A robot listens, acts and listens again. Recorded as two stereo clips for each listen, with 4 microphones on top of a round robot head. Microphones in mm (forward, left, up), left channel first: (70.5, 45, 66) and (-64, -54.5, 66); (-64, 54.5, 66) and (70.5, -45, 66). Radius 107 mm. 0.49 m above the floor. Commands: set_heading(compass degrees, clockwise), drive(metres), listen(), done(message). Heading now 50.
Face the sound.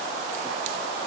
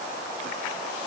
listen()
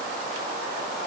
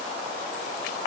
listen()
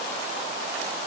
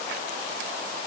done("I can't make out anything to turn to.")